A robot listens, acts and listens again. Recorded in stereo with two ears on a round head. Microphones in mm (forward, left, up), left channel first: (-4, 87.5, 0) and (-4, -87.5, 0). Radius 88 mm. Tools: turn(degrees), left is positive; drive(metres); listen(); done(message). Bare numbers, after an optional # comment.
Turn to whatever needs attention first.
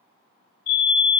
# The fire alarm: about 55° left or 125° left.
turn(55)
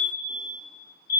# So it is at 65° left.
turn(65)
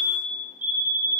# The fire alarm is now 10° right.
turn(-10)
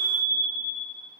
done("Facing the fire alarm.")